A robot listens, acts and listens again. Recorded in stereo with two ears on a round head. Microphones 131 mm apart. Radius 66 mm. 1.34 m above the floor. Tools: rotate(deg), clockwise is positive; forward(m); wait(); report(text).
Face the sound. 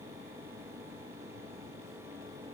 wait()
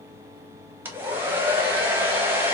rotate(30)
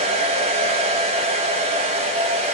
rotate(135)
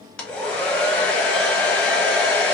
report("Facing the hair dryer.")